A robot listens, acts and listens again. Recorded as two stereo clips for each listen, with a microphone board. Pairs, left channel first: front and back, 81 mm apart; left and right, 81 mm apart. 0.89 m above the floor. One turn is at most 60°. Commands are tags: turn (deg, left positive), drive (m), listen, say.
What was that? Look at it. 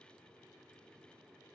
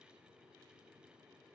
<listen/>
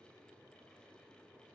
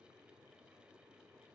<listen/>
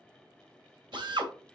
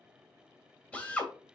<turn deg="60"/>
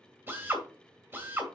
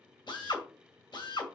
<turn deg="60"/>
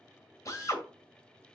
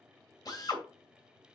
<turn deg="50"/>
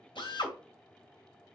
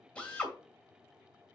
<turn deg="15"/>
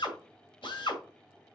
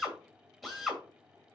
<say>Found it: a drill, straight ahead, 2 to 4 m away.</say>